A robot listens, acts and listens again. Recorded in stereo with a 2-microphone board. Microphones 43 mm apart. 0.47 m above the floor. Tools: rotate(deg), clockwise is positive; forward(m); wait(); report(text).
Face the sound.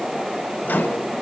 rotate(-45)
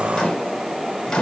rotate(-15)
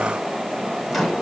report("Found it: a microwave, straight ahead.")